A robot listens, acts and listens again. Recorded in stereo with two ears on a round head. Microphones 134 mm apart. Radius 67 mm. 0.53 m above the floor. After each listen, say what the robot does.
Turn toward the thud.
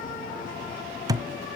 Turn 25° right.
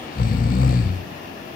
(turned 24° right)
Keep listening.
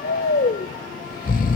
I heard a thud, but can't make it out now. It was about straight ahead or 130° right.